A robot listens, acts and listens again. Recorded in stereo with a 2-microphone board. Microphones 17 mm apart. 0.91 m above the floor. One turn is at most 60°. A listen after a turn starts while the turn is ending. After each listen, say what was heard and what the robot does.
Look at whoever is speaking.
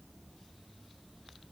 Keep listening.
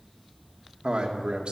Turn 60° right.
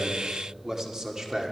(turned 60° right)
So it is at 40° right. Turn 40° right.
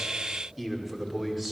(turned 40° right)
The man speaking is now 15° right. Turn 15° right.
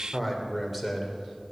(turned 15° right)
Facing the man speaking, 2 to 4 m away.